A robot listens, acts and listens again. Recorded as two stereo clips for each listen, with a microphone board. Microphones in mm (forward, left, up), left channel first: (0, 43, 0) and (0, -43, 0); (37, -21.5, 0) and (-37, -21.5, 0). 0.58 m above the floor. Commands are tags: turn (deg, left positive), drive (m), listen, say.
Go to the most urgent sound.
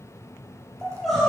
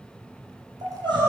<turn deg="180"/>
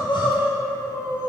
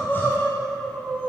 <turn deg="70"/>
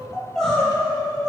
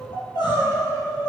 <turn deg="10"/>
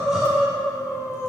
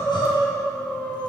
<drive m="1.0"/>
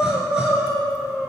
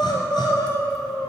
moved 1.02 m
<drive m="1.0"/>
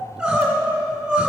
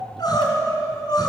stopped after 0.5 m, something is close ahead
<turn deg="-10"/>
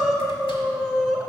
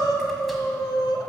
<say>Arrived at the crying, straight ahead.</say>